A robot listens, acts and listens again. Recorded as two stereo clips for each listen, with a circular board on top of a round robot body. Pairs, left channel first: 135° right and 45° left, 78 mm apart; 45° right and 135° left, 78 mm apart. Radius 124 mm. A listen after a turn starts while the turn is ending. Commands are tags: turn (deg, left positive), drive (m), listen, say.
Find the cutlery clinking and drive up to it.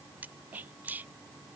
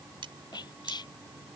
<turn deg="115"/>
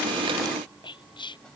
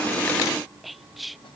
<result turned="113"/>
<listen/>
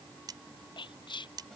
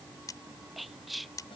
<drive m="1.0"/>
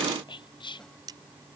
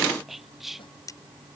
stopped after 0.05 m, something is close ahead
<say>Something is in my way. I am facing the cutlery clinking but have not reached it.</say>